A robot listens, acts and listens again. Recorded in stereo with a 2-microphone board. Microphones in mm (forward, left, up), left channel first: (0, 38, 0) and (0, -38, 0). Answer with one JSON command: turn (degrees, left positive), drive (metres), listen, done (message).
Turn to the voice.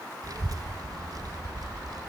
{"turn": -55}
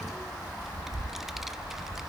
{"done": "Found it: a child speaking, straight ahead."}